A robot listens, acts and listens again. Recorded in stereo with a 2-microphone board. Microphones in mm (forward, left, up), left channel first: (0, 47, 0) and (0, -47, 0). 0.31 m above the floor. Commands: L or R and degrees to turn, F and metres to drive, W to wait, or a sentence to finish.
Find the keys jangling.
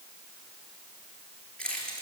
L30
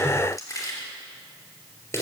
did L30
L155
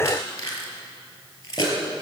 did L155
L40
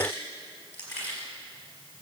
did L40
L20
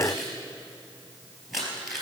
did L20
Facing the keys jangling.